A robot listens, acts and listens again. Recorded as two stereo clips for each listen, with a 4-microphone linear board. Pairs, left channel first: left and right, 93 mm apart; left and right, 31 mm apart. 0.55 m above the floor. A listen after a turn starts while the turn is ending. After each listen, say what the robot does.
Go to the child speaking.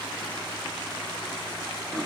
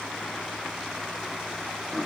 Keep listening.
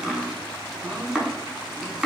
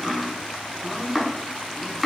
Keep listening.
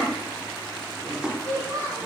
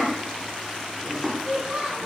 Turn 40° right.
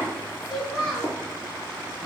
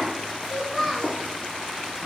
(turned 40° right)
Drive 1.0 m forward.
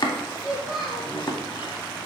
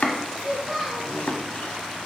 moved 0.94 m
Drive 1.0 m forward.
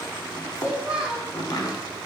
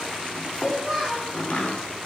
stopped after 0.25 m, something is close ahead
Turn 10° right.
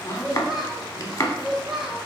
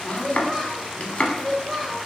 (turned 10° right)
I am next to the child speaking.